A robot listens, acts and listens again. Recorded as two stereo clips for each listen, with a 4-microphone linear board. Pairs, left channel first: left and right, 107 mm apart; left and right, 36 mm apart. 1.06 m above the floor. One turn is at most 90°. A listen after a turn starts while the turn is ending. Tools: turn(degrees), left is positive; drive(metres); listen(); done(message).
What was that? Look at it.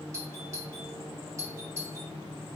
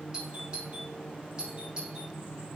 turn(degrees=-30)
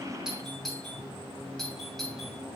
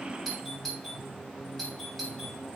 done("Found it: a doorbell, straight ahead, 2 to 4 m away.")